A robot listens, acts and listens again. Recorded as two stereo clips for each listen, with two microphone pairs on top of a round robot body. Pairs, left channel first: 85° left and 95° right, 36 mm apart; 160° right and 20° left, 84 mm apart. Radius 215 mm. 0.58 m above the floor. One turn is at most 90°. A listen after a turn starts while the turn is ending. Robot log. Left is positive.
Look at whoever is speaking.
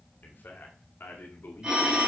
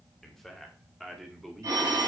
note: The man speaking: 110° left.
cmd yaw +90
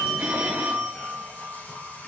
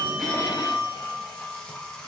note: Nothing new. It was at 20° left.
cmd yaw +20
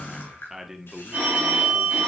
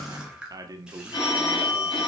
note: The man speaking is now 30° right.
cmd yaw -30
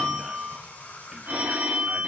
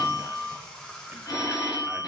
cmd idle
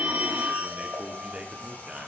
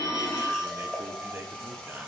note: The man speaking is now 50° right.
cmd yaw -50
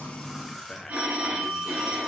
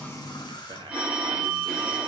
cmd idle
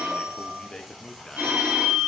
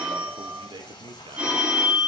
end: Found it: a man speaking, straight ahead.